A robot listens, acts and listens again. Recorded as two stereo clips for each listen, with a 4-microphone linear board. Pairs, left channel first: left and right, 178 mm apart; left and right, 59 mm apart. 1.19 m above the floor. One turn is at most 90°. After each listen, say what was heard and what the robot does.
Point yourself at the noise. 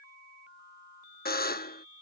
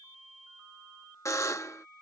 The buzzer: about 60° left or 120° left. Turn 60° left.
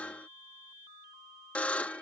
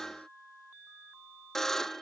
So it is at 10° left. Turn 10° left.
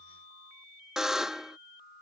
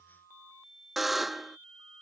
Facing the buzzer.